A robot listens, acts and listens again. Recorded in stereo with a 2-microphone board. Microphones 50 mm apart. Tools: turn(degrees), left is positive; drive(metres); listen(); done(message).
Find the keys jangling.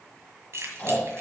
turn(degrees=-60)
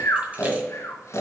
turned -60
listen()
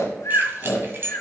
turn(degrees=-50)
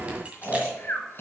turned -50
listen()
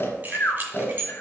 turn(degrees=-40)
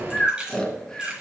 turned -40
turn(degrees=-20)
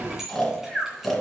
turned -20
listen()
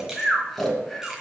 listen()
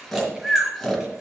done("I heard keys jangling from this way, but can't make it out now.")